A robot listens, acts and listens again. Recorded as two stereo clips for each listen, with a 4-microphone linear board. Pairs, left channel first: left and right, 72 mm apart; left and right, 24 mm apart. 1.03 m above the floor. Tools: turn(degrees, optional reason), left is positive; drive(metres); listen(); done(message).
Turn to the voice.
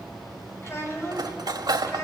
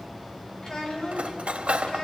turn(degrees=40, reason="The child speaking: about 40° left or 140° left.")
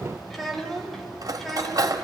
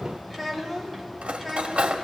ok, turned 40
done("Facing the child speaking.")